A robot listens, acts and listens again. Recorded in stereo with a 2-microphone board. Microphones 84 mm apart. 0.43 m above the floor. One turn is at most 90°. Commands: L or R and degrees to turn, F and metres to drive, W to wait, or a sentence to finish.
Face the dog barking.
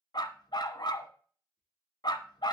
L60
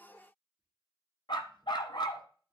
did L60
L60
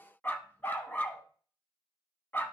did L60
L20
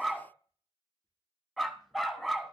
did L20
Found it: a dog barking, straight ahead, 1 to 2 m away.